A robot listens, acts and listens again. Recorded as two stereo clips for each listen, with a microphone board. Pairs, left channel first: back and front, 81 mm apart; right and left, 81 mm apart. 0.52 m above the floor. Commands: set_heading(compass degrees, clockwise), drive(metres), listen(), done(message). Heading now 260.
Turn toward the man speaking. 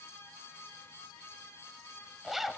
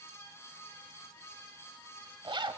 listen()
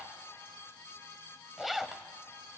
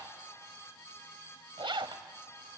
listen()
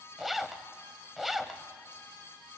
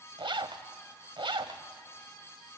done("I can't make out a man speaking, only a zipper.")